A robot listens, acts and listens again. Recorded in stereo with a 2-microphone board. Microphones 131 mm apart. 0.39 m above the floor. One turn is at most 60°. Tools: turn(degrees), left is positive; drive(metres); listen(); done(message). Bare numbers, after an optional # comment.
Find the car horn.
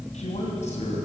listen()
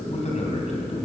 listen()
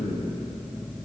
done("I can't make out a car horn, only a man speaking.")